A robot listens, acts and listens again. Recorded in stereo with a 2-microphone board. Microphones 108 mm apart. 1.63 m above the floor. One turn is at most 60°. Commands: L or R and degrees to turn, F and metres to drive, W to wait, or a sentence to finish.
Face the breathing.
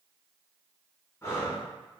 L25
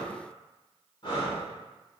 L60
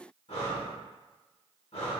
L60
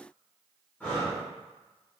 L20
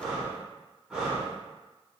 Facing the breathing.